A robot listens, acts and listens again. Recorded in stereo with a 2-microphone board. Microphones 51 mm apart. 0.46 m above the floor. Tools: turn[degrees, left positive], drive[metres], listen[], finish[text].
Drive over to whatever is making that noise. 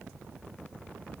Action: listen[]
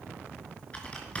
Thought: The typing on a keyboard: about 25° left or 155° left.
Action: turn[25]
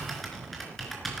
Action: drive[1.0]
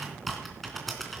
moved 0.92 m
Action: drive[1.0]
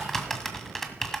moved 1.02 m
Action: drive[1.0]
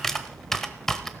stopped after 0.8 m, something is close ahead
Action: finish[I am next to the typing on a keyboard.]